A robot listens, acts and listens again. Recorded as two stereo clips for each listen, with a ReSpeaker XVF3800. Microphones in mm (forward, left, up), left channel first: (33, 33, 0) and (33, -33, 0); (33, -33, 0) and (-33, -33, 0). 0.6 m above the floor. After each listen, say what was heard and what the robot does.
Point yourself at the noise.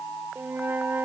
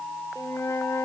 The flute: 35° right. Turn 35° right.
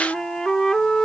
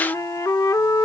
The flute is now 10° left. Turn 10° left.
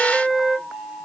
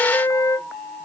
Found it: a flute, straight ahead.